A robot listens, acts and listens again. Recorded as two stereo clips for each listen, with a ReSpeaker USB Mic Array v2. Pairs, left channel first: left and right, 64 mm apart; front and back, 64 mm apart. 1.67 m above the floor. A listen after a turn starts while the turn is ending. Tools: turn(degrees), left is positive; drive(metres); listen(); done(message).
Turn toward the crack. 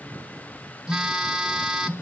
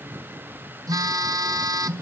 listen()
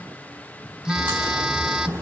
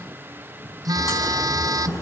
turn(degrees=-25)
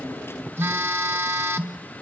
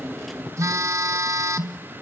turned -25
done("Facing where the crack came from. I can't hear it now.")